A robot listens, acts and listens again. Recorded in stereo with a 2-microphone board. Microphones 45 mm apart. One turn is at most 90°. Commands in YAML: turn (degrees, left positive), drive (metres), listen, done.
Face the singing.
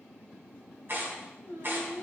turn: -90
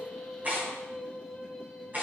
done: "Found it: singing, straight ahead."